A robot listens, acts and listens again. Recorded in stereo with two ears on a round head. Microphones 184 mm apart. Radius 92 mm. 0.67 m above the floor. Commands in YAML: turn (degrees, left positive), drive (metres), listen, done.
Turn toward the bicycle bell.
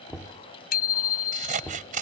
turn: 45
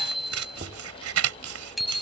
done: "Found it: a bicycle bell, straight ahead."